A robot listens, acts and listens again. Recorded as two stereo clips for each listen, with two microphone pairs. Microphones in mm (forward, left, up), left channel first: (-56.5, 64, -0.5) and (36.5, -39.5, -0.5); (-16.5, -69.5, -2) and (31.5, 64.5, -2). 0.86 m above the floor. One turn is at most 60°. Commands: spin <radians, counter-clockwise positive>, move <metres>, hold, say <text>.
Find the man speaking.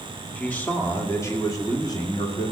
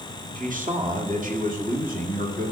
spin 1.05
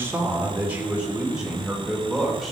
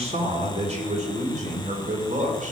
spin 0.70
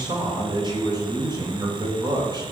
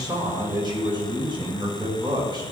spin 0.17
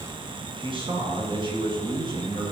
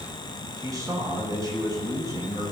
say Found it: a man speaking, straight ahead.